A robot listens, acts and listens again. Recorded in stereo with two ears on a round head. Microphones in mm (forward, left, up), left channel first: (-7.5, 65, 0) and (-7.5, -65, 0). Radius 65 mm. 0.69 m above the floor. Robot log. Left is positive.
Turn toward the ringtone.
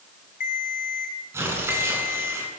note: The ringtone: about 55° left or 125° left.
cmd yaw +55
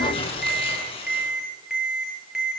end: Facing the ringtone.